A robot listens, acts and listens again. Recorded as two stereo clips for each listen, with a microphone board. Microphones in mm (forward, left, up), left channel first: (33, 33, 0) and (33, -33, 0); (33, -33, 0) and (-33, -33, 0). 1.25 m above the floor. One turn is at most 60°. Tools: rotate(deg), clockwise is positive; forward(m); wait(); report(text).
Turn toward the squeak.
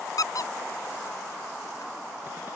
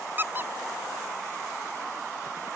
rotate(-60)
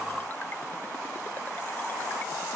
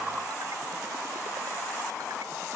rotate(-60)
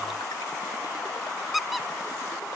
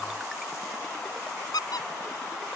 report("Facing the squeak.")